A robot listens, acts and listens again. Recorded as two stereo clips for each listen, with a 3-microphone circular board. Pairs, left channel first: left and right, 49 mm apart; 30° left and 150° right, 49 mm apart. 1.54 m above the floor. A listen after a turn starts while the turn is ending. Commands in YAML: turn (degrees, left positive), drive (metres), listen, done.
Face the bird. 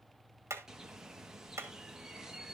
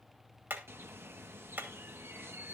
turn: -170
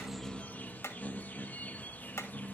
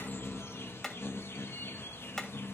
turn: 45
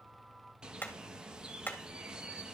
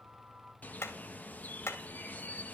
turn: -20
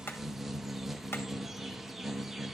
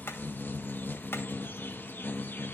done: "Facing the bird, 1 to 2 m away."